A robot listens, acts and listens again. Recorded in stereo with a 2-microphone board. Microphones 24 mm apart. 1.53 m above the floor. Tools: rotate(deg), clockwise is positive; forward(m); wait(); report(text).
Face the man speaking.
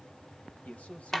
rotate(-90)
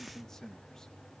rotate(-20)
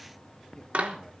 wait()
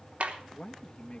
rotate(-40)
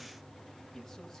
wait()
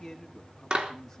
rotate(-10)
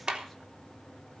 wait()
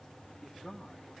report("Found it: a man speaking, straight ahead.")